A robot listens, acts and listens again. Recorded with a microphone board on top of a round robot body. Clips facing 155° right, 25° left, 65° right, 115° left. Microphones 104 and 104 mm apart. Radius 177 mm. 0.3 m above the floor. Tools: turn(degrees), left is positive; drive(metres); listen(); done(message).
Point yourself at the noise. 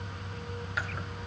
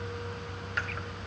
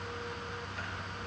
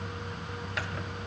turn(degrees=120)
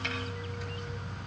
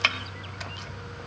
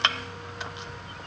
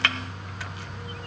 done("Found it: chopping, straight ahead, under 1 m away.")